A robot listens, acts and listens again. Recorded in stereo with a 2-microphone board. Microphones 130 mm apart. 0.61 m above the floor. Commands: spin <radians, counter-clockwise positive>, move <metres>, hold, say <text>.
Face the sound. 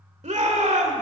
spin -1.05
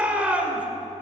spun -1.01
spin -0.17
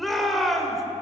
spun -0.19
say Found it: a shout, straight ahead.